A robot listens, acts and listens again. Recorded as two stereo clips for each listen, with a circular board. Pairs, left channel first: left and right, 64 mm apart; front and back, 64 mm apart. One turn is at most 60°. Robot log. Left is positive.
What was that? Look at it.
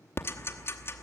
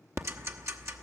note: The ticking: 140° left.
cmd yaw +60
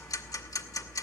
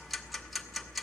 note: The ticking is now 90° left.
cmd yaw +60
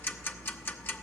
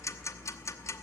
note: The ticking is now 40° left.
cmd yaw +40
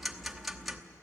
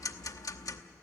end: Facing the ticking, under 1 m away.